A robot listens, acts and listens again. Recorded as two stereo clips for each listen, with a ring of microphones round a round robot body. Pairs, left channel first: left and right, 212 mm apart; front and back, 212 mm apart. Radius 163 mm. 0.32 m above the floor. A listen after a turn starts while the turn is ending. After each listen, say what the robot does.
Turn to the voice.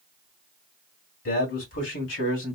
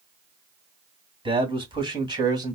Turn 110° left.
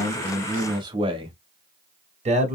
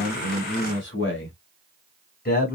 Turn 40° right.
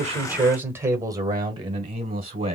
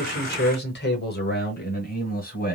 Turn 30° right.
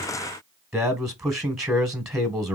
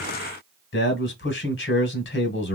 Found it: a man speaking, straight ahead.